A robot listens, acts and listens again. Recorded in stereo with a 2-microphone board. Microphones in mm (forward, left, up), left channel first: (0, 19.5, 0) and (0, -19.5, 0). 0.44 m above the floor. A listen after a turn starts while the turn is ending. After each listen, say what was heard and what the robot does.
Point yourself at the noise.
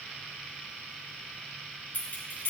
The keys jangling: about 45° left or 135° left. Turn 45° left.
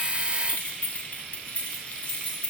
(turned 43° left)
The keys jangling: about 35° left or 145° left. Turn 35° left.
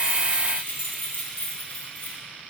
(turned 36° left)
The keys jangling: about 50° left or 130° left. Turn 50° left.
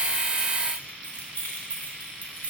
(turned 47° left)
So it is at 65° left. Turn 65° left.
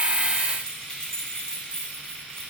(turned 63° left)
The keys jangling is now 10° left. Turn 10° left.
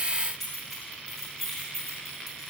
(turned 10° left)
Found it: keys jangling, straight ahead.